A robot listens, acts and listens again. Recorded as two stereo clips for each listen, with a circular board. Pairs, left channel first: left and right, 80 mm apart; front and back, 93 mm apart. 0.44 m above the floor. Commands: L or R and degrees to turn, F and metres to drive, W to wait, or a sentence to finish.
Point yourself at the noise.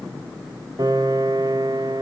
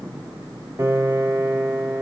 R120
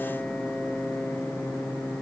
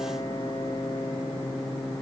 L10
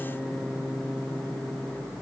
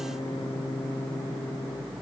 Found it: a piano, straight ahead.